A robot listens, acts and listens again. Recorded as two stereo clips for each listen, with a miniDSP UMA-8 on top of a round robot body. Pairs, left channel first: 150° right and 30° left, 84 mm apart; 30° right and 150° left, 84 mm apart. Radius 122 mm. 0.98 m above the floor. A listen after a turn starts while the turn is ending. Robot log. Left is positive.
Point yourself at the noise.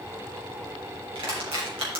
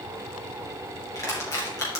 note: The crushing: 20° left.
cmd yaw +20
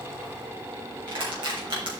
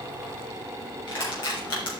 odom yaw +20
end: Facing the crushing, 2 to 4 m away.